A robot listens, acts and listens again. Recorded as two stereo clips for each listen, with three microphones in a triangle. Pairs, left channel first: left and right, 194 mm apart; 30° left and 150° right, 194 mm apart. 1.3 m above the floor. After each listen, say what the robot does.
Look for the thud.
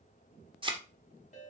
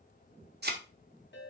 Turn 150° right.
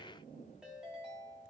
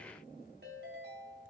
I heard a thud from this way, but can't make it out now.